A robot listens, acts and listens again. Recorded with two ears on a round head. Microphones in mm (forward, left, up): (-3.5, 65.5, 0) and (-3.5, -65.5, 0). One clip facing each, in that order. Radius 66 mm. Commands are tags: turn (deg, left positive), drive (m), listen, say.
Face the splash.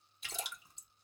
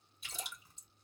<turn deg="55"/>
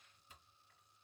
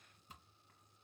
<listen/>
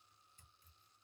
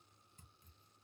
<say>I heard a splash, but can't make it out now. It was about straight ahead or 70° left.</say>